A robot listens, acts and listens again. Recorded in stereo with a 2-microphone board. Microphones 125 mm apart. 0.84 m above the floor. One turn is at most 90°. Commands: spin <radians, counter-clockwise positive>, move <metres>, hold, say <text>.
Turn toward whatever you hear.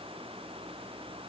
hold
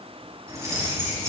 spin -0.52
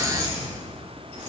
spin -1.57
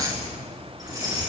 spin -0.61
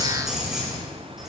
say Found it: keys jangling, straight ahead, over 4 m away.